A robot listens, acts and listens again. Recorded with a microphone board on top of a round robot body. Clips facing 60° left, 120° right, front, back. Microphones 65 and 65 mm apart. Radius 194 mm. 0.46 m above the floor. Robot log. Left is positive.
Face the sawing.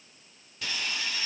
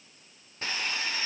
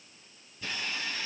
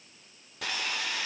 note: The sawing: 175° right.
cmd yaw -175
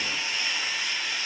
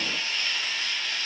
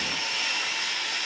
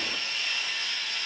note: The sawing is now 15° right.
cmd yaw -15
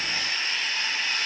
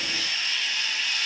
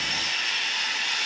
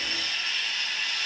end: Found it: sawing, straight ahead.